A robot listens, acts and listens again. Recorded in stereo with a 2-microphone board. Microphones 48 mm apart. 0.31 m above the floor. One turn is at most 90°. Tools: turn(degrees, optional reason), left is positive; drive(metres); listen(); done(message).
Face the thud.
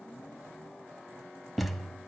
turn(degrees=30)
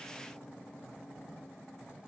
listen()
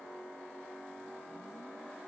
done("I heard a thud, but can't make it out now. It was about 30° right or 150° left.")